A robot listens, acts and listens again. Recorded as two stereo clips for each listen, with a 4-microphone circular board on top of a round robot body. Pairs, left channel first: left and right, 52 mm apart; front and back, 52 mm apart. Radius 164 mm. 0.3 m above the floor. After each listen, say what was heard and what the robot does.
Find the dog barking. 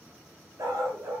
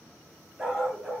The dog barking: 95° right. Turn 95° right.
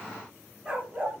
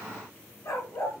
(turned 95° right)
The dog barking is now 20° right. Turn 20° right.
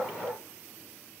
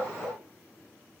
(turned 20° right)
Found it: a dog barking, straight ahead, 2 to 4 m away.